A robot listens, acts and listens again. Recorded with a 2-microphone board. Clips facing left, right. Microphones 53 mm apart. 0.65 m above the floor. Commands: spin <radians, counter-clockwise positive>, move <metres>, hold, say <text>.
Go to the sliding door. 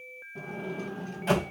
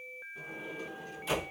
spin 0.96
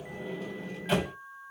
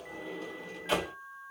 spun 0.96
move 1.0
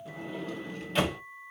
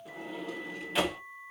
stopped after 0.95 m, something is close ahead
say I am next to the sliding door.